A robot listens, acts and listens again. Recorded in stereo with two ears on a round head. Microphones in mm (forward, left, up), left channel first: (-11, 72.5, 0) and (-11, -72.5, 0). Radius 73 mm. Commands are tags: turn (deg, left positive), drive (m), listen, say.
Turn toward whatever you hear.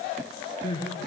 <turn deg="30"/>
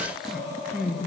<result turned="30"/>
<say>Found it: crying, straight ahead.</say>